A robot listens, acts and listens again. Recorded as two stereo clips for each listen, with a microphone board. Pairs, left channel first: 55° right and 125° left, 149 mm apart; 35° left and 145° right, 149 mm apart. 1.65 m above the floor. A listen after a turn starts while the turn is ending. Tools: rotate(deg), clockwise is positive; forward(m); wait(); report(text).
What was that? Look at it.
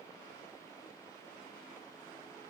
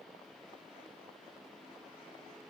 wait()
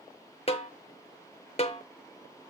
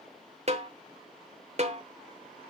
rotate(105)
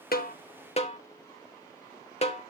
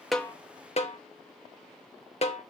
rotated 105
rotate(10)
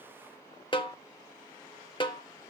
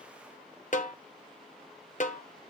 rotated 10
report("Facing the snare drum, 1 to 2 m away.")